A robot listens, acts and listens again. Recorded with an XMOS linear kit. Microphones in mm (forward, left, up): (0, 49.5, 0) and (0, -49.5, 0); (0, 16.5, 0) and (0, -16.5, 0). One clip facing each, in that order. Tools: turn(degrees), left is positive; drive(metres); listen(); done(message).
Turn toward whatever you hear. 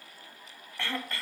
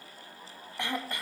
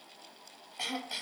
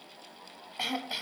turn(degrees=-15)
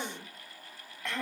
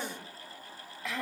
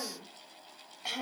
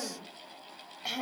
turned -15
done("Found it: throat clearing, straight ahead, 2 to 4 m away.")